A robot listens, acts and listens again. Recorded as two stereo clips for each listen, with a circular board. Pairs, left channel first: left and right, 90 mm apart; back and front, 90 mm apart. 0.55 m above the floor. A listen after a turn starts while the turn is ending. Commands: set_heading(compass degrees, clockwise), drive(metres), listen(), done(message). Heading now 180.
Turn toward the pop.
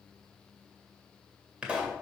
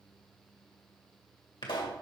set_heading(345)
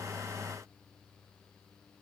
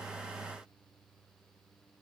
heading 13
set_heading(343)
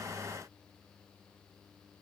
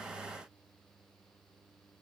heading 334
set_heading(344)
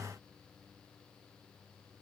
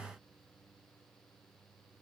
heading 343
done("Facing where the pop came from. I can't hear it now.")